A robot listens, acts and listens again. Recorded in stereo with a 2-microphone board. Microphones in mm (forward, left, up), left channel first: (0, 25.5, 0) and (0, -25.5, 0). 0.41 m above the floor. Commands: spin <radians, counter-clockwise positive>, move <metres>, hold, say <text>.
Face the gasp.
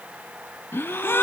spin 0.87
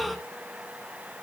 say Found it: a gasp, straight ahead, under 1 m away.